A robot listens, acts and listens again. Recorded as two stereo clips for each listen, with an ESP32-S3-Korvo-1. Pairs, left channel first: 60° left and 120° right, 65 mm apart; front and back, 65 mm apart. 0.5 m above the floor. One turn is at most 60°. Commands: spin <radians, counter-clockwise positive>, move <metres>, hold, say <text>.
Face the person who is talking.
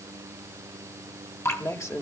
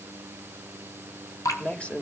spin 1.05
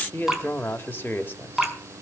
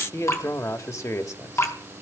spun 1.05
spin 0.17
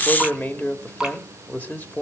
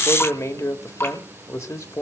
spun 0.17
say Found it: a man speaking, straight ahead.